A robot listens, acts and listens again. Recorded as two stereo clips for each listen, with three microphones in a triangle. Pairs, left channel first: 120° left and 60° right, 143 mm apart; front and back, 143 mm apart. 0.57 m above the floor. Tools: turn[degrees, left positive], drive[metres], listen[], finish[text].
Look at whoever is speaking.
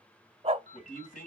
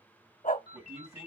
Thought: The man speaking: 110° left.
Action: turn[110]
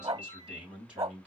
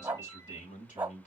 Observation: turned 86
Thought: The man speaking is now 25° left.
Action: turn[25]
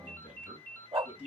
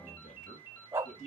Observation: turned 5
Thought: The man speaking is now 20° left.
Action: turn[20]
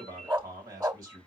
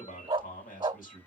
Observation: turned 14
Action: finish[Found it: a man speaking, straight ahead, 2 to 4 m away.]